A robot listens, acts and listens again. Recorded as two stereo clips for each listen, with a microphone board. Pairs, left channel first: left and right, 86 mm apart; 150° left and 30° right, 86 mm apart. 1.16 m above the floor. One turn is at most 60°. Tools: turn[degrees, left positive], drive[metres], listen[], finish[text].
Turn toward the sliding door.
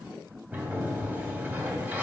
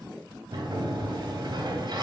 Thought: The sliding door: 20° right.
Action: turn[-20]
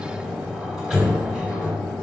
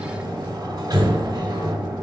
Action: finish[Found it: a sliding door, straight ahead.]